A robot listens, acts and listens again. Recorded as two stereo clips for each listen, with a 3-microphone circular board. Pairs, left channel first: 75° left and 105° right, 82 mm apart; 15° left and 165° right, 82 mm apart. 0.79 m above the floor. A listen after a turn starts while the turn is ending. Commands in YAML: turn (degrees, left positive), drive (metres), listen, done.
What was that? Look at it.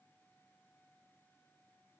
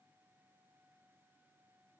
listen: true
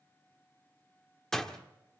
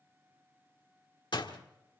turn: -10
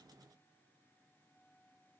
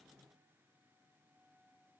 done: "I heard a door slam from this way, but can't make it out now."